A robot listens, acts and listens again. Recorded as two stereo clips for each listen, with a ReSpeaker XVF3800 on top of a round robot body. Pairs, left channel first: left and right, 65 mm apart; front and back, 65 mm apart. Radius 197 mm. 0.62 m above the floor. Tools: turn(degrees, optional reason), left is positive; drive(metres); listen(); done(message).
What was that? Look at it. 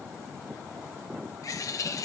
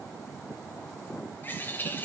turn(degrees=60, reason="The bird: 60° left.")
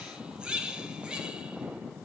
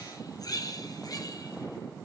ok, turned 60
turn(degrees=-15, reason="The bird is now 15° right.")
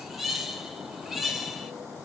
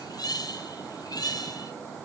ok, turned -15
done("Facing the bird.")